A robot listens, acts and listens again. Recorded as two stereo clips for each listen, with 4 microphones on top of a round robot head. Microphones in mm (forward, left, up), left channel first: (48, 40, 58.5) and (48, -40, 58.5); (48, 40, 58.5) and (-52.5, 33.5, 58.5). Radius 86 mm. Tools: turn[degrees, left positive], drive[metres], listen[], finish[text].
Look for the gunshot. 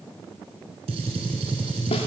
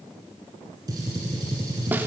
Thought: The gunshot: 110° right.
Action: turn[-110]
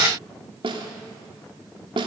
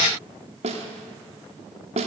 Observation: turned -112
Action: finish[Facing where the gunshot came from. I can't hear it now.]